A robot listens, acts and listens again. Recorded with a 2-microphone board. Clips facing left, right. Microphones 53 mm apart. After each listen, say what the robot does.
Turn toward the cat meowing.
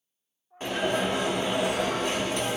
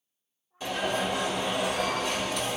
Turn 90° left.
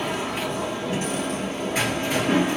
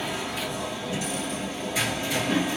Keep listening.
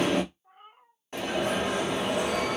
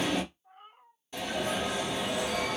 Turn 10° left.
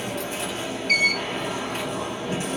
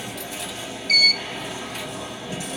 Keep listening.
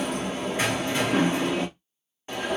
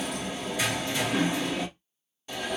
Keep listening.
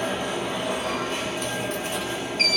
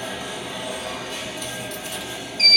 Facing where the cat meowing came from. I can't hear it now.